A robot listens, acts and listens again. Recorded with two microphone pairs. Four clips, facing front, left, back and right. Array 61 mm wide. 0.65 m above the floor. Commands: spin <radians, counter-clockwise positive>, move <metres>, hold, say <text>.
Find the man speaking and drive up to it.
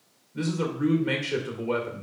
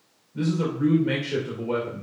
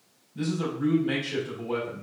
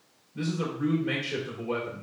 move 1.0
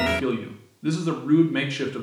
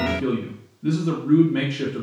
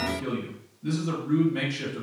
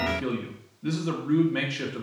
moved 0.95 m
move 1.0
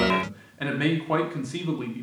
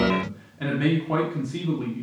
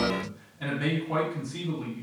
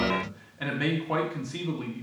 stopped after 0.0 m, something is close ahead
spin -0.17
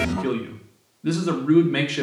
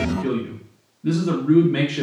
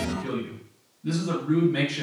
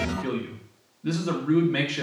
say I am next to the man speaking.